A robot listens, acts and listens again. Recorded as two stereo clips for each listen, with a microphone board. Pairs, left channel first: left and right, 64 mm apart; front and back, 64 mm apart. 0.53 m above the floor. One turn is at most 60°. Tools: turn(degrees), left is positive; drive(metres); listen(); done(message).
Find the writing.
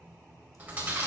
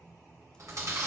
listen()
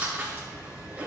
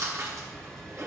listen()
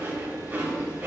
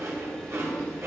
done("I can't make out writing to turn to.")